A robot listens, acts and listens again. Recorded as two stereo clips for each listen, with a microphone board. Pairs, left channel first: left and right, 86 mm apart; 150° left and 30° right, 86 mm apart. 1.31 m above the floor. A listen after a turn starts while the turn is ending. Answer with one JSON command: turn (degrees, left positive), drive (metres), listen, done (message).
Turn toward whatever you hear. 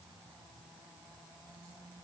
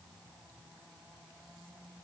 {"listen": true}
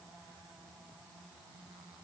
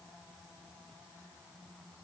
{"listen": true}
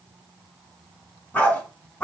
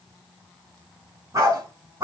{"turn": 20}
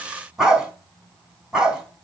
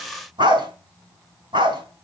{"done": "Facing the dog barking."}